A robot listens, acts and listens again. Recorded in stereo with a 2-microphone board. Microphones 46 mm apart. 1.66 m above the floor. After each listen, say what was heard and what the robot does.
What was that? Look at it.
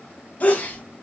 The sneeze: about 35° left or 145° left. Turn 35° left.
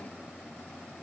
Keep listening.
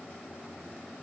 I heard a sneeze, but can't make it out now. It was about straight ahead or 110° left.